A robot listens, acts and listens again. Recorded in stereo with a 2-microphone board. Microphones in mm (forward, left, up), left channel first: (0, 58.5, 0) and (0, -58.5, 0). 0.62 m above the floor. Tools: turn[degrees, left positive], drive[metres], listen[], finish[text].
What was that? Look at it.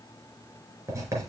Thought: The writing: about 25° right or 155° right.
Action: turn[-25]
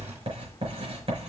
Thought: So it is at 125° right.
Action: turn[-125]
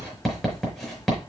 Action: finish[Found it: writing, straight ahead.]